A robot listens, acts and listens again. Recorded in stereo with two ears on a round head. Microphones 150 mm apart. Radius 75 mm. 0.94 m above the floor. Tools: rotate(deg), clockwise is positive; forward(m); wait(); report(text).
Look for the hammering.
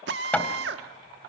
rotate(-30)
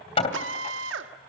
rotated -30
rotate(-145)
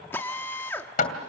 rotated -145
rotate(-45)
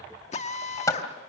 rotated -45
rotate(-20)
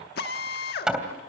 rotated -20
report("Found it: hammering, straight ahead.")